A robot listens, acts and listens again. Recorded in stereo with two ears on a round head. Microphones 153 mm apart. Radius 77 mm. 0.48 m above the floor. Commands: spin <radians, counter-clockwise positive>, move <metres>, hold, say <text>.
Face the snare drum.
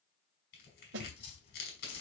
spin -1.57
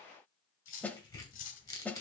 spin 0.17
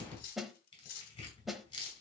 say Found it: a snare drum, straight ahead, under 1 m away.